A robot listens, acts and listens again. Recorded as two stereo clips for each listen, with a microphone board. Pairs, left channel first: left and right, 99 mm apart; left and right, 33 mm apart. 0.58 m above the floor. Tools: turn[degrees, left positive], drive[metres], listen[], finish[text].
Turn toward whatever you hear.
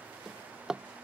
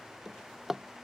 Action: turn[-30]
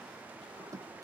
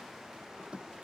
Thought: So it is at 145° right.
Action: turn[-145]
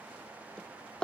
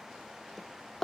Thought: The drawer is now 10° left.
Action: turn[10]
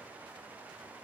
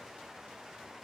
Action: listen[]
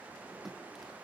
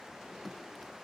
Action: finish[Found it: a drawer, straight ahead.]